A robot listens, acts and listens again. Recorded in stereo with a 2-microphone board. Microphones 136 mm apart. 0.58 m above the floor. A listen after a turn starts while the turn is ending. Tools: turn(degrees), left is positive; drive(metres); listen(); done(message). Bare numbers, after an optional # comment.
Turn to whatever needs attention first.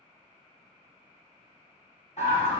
# The scream: about 55° left or 125° left.
turn(55)
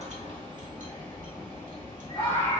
# So it is at 45° left.
turn(45)
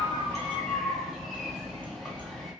done("Facing the scream.")